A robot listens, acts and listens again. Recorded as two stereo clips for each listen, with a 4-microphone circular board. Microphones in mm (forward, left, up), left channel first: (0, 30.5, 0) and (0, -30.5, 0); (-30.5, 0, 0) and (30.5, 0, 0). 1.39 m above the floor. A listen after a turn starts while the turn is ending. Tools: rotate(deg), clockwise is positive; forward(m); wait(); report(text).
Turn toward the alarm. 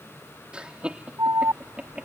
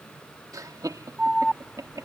rotate(85)
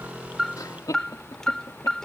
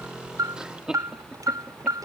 rotate(-10)
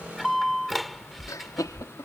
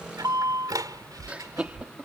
report("Facing the alarm.")